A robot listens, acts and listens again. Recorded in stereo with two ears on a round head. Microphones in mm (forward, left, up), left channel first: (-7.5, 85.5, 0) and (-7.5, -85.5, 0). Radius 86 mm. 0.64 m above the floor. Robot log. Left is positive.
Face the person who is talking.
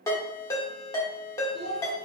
note: The child speaking: about 60° right or 120° right.
cmd yaw -60
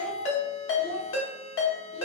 note: So it is at 60° right.
cmd yaw -60
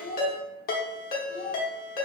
end: Found it: a child speaking, straight ahead, 1 to 2 m away.